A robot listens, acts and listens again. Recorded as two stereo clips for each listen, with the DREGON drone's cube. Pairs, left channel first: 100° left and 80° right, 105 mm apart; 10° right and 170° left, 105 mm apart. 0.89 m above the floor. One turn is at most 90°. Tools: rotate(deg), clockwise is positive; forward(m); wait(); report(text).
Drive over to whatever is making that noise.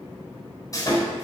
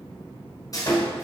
rotate(-45)
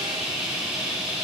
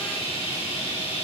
forward(1.0)
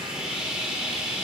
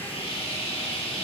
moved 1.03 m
forward(1.0)
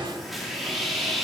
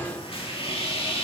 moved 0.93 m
rotate(-10)
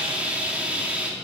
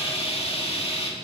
forward(1.0)
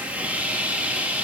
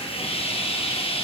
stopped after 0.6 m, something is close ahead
report("I am next to the sawing.")